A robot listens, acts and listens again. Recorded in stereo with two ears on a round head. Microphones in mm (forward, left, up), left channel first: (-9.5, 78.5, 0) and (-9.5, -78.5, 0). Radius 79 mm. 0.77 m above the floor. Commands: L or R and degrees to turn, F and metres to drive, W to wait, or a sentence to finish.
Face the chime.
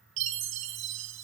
R90
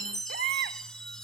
Found it: a chime, straight ahead.